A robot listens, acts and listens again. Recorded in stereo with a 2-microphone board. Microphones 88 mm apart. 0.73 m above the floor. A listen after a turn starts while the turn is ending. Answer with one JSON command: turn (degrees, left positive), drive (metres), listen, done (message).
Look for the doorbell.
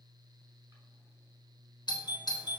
{"turn": 60}
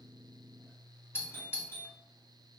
{"turn": 30}
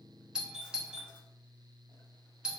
{"turn": -10}
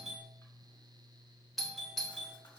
{"done": "Facing the doorbell, 2 to 4 m away."}